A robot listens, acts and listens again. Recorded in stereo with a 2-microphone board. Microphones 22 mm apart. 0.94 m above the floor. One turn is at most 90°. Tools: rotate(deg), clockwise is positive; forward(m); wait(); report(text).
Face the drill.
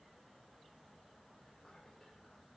wait()
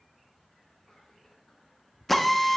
rotate(-30)
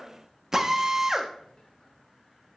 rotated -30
rotate(20)
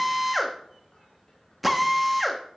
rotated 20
report("Facing the drill, under 1 m away.")